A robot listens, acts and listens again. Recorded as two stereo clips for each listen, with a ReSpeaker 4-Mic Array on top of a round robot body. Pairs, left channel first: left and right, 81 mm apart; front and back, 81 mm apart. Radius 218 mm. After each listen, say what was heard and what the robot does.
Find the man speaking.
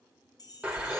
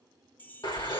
Keep listening.
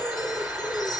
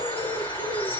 Keep listening.
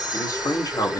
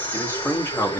The man speaking: 55° left. Turn 55° left.
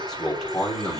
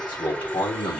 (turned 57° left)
The man speaking is now 10° left. Turn 10° left.
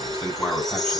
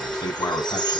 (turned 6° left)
Found it: a man speaking, straight ahead.